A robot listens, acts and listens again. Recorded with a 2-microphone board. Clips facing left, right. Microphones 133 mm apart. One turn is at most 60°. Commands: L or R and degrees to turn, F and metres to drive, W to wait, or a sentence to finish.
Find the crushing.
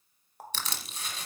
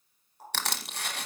R60
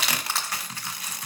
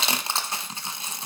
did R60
R25
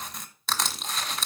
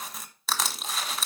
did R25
Found it: crushing, straight ahead, 1 to 2 m away.